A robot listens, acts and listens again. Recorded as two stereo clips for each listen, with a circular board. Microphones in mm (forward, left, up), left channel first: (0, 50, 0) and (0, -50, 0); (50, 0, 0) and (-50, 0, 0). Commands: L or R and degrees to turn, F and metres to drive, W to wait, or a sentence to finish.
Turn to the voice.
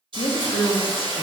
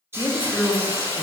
L70
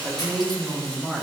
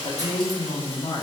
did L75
Facing the woman speaking.